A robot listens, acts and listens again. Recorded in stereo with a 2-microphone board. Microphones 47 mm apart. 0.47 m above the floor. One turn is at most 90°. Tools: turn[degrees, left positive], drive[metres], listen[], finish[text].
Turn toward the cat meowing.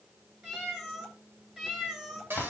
Action: turn[-30]
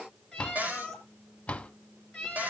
Thought: So it is at 15° left.
Action: turn[15]
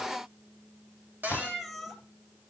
Action: finish[Facing the cat meowing, 2 to 4 m away.]